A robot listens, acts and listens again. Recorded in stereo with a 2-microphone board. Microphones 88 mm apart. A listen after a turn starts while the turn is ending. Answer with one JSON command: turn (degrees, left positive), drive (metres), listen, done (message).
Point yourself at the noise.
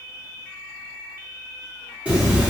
{"turn": -30}
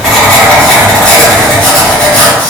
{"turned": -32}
{"turn": 15}
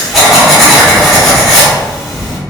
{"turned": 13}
{"done": "Found it: writing, straight ahead, under 1 m away."}